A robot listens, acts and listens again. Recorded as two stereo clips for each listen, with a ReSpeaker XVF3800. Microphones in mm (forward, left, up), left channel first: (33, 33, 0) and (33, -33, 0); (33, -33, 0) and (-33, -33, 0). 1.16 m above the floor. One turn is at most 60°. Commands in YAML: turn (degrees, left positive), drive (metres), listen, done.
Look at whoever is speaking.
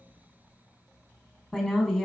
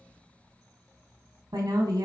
turn: -60
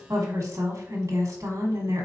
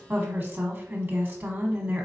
turn: -60
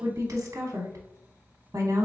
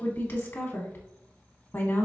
turn: -50
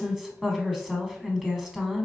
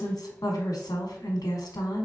done: "Facing the woman speaking."